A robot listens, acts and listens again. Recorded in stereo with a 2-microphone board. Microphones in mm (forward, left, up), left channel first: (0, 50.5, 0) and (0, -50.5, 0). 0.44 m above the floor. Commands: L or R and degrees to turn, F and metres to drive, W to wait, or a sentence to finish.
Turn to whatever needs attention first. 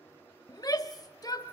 L40
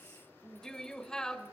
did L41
L10
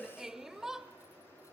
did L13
Found it: a shout, straight ahead.